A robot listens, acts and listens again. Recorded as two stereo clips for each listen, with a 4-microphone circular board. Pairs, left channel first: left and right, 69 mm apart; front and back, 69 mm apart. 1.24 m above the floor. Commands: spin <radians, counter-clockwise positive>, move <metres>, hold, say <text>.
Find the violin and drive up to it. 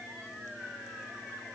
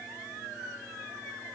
hold
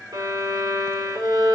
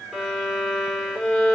spin -1.48
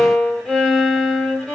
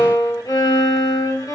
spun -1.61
move 1.0
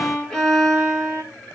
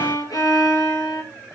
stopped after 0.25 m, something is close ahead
spin 0.17
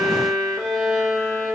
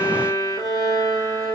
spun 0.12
say Blocked. The violin is further on, straight ahead.